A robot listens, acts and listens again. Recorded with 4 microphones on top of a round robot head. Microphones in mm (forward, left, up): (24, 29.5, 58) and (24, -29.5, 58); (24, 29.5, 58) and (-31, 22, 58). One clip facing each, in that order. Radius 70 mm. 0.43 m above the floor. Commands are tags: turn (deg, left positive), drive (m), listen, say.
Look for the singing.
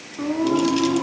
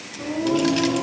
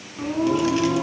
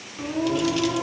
<turn deg="60"/>
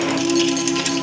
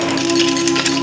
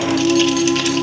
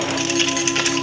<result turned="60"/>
<turn deg="-20"/>
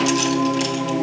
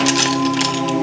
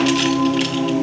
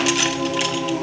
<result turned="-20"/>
<turn deg="-10"/>
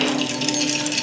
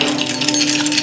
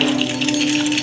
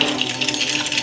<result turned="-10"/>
<turn deg="-10"/>
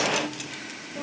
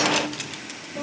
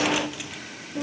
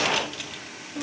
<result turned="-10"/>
<say>Facing the singing.</say>